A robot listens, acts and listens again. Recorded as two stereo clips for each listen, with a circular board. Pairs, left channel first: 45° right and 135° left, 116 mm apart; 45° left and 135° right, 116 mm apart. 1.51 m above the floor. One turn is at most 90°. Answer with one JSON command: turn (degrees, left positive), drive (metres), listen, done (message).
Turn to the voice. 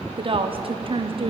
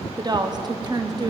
{"turn": 90}
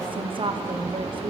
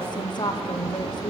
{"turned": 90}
{"turn": 90}
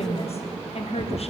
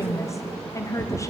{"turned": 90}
{"turn": -20}
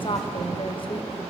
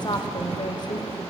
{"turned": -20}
{"done": "Found it: a woman speaking, straight ahead, under 1 m away."}